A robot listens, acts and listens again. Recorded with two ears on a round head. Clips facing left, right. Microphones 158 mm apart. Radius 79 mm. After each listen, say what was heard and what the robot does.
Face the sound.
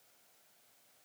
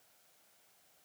Keep listening.
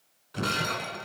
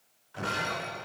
The breaking glass: about 55° left or 125° left. Turn 55° left.
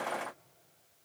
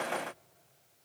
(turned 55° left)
Keep listening.
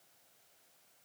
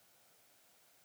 I heard breaking glass, but can't make it out now. It was about straight ahead or 70° left.